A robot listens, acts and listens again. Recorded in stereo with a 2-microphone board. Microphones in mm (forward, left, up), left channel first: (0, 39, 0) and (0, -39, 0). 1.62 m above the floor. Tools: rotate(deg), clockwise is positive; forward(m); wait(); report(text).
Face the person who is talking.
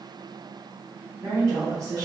rotate(40)
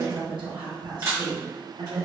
rotate(100)
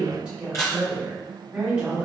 rotate(15)
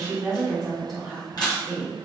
report("Facing the woman speaking, 1 to 2 m away.")